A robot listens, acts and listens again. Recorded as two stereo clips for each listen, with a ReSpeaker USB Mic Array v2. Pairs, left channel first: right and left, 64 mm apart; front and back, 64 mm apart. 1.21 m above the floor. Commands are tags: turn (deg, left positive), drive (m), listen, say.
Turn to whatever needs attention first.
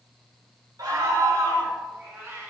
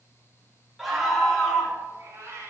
<turn deg="95"/>
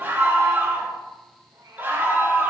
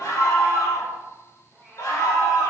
<turn deg="30"/>
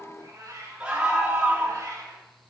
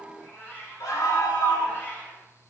<turn deg="15"/>
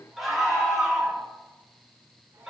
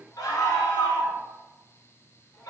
<say>Facing the scream, 2 to 4 m away.</say>